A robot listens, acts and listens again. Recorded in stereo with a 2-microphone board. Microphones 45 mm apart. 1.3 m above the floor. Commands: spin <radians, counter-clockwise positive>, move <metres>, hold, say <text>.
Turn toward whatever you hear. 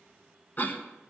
spin 0.70
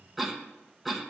say Facing the cough, 1 to 2 m away.